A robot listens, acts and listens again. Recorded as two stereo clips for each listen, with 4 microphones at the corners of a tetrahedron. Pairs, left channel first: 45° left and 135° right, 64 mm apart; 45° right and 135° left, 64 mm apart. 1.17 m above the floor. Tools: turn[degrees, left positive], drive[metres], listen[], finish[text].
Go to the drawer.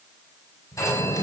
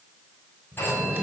Thought: The drawer: 65° left.
Action: turn[65]
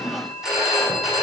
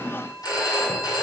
Action: listen[]
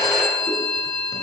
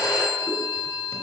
Action: listen[]
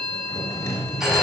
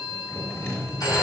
Action: drive[1.0]
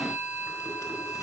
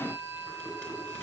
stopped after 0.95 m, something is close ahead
Action: listen[]
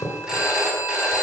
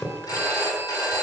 Thought: The drawer is now 10° left.
Action: turn[10]
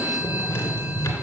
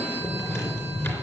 Action: finish[Something is in my way. I am facing the drawer but have not reached it.]